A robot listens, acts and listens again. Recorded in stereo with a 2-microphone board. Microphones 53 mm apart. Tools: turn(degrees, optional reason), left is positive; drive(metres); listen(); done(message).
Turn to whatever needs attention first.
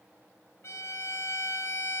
listen()
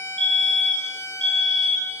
turn(degrees=30)
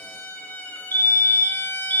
turn(degrees=135, reason="So it is at 135° left.")
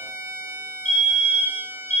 turn(degrees=15, reason="The fire alarm is now 15° left.")
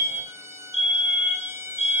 done("Facing the fire alarm, over 4 m away.")